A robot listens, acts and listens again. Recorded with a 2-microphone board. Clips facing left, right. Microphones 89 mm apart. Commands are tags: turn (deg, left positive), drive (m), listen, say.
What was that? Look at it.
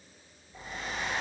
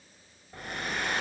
<turn deg="-90"/>
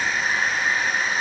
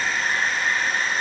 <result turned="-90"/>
<say>Found it: a hair dryer, straight ahead.</say>